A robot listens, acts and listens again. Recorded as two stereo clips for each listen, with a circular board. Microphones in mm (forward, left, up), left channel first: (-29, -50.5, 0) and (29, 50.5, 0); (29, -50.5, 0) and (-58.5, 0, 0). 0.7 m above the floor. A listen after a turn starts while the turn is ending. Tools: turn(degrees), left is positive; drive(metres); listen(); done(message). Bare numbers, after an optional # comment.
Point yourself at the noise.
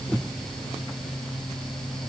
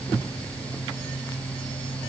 listen()
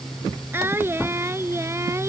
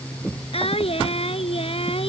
# The singing: 10° right.
turn(-10)
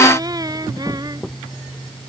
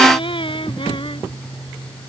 done("Facing the singing.")